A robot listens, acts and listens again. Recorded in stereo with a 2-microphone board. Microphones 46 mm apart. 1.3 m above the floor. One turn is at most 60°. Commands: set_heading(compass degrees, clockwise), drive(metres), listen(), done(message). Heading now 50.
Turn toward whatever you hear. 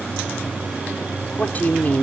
set_heading(15)
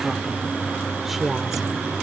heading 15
done("Facing the woman speaking.")